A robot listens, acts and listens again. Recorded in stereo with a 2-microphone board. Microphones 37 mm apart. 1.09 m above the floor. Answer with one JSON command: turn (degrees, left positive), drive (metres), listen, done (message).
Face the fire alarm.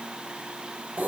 {"listen": true}
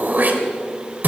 {"listen": true}
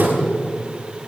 {"done": "I can't make out a fire alarm to turn to."}